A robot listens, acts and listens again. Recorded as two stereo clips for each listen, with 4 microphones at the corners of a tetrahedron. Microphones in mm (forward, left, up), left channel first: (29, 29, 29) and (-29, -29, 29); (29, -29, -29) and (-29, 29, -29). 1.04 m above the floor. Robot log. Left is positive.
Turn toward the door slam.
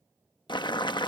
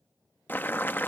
cmd idle
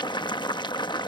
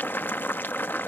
cmd idle
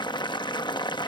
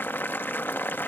end: I can't make out a door slam, only boiling.